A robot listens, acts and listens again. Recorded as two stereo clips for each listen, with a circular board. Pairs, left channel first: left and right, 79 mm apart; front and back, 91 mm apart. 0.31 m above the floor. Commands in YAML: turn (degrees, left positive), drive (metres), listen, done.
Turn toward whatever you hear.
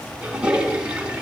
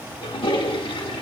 turn: -15
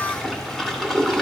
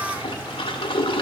done: "Facing the toilet flushing, under 1 m away."